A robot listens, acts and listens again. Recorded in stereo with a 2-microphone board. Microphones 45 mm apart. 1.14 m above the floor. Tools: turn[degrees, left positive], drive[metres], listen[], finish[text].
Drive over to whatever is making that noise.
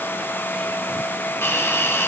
Thought: The hiss: about 70° left or 110° left.
Action: turn[70]
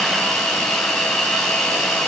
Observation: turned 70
Action: drive[1.0]
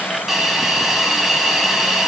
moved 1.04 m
Action: drive[1.0]
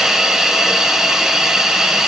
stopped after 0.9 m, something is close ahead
Thought: The hiss is now 10° right.
Action: turn[-10]
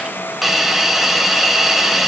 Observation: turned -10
Action: finish[Arrived at the hiss, straight ahead.]